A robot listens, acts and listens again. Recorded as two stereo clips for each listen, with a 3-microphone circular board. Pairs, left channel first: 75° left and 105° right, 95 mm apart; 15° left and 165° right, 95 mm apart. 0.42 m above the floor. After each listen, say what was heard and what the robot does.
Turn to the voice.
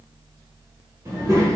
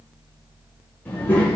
The child speaking: 50° right. Turn 50° right.
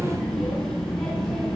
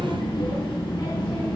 The child speaking is now 10° right. Turn 10° right.
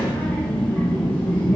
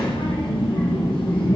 Facing the child speaking.